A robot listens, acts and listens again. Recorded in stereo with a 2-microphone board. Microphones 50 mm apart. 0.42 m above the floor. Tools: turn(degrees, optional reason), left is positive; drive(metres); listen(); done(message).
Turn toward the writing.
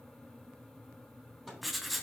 turn(degrees=30)
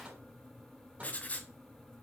turn(degrees=150, reason="So it is at 150° left.")
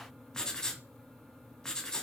turn(degrees=15, reason="The writing is now 15° left.")
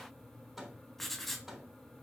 done("Found it: writing, straight ahead, 1 to 2 m away.")